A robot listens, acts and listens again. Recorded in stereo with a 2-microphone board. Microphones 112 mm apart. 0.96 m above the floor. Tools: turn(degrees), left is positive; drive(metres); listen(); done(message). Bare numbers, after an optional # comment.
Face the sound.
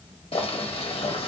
# The boiling: about 55° left or 125° left.
turn(55)
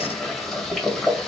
done("Found it: boiling, straight ahead.")